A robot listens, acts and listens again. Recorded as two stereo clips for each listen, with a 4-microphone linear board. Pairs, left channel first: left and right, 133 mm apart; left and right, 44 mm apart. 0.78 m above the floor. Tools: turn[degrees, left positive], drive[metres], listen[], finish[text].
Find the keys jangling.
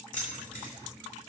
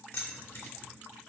Thought: The keys jangling: about 70° left or 110° left.
Action: turn[70]
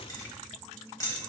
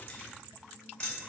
Thought: So it is at 25° left.
Action: turn[25]
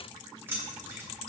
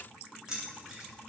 Thought: The keys jangling is now 15° right.
Action: turn[-15]
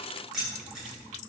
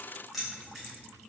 Action: finish[Found it: keys jangling, straight ahead.]